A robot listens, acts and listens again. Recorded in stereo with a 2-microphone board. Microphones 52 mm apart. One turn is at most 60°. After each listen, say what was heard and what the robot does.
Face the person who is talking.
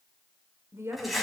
The woman speaking: about 60° right or 120° right. Turn 60° right.
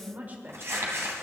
So it is at 40° right. Turn 40° right.
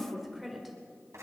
Found it: a woman speaking, straight ahead, 1 to 2 m away.